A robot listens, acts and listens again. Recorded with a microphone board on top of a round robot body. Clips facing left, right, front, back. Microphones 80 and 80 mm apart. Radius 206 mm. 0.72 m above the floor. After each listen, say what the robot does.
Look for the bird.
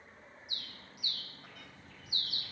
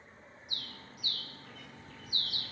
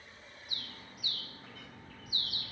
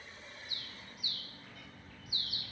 Turn 45° right.
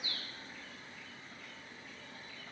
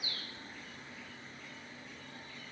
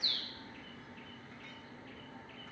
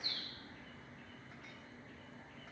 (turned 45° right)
Facing the bird.